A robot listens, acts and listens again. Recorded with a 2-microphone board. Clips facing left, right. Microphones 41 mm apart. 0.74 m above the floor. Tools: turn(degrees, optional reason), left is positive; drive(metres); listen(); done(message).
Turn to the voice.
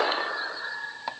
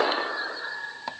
listen()
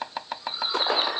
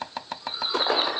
listen()
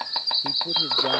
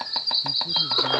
turn(degrees=70, reason="The man speaking: about 70° left or 110° left.")
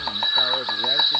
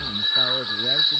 done("Found it: a man speaking, straight ahead.")